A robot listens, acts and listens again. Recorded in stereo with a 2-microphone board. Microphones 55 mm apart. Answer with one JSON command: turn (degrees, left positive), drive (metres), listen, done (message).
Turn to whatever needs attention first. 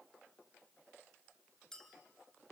{"listen": true}
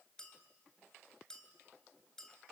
{"listen": true}
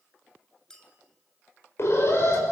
{"turn": 55}
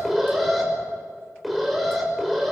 {"done": "Found it: an alarm, straight ahead."}